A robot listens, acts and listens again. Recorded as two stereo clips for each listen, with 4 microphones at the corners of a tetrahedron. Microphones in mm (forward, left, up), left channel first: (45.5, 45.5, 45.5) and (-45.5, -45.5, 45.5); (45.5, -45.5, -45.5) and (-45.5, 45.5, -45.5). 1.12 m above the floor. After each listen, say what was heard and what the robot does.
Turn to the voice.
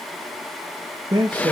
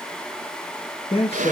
The man speaking: 75° right. Turn 75° right.
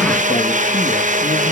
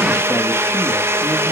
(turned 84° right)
Nothing new. It was at 10° left. Turn 10° left.
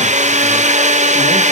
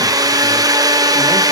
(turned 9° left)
Keep listening.
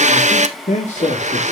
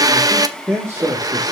The man speaking is now 55° left. Turn 55° left.
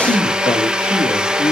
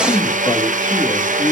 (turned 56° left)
Found it: a man speaking, straight ahead.